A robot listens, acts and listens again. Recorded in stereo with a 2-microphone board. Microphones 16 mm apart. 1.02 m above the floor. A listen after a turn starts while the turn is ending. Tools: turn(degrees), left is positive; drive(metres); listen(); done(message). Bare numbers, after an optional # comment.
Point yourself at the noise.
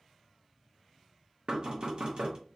# The knocking: about 50° right or 130° right.
turn(-50)
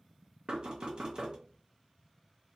# So it is at 70° right.
turn(-70)
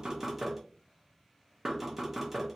# The knocking is now 20° right.
turn(-20)
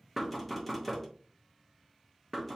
done("Facing the knocking, 1 to 2 m away.")